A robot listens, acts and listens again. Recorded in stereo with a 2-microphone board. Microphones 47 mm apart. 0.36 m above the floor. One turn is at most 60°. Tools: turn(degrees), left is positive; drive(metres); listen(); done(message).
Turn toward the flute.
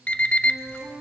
turn(degrees=55)
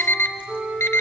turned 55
done("Facing the flute.")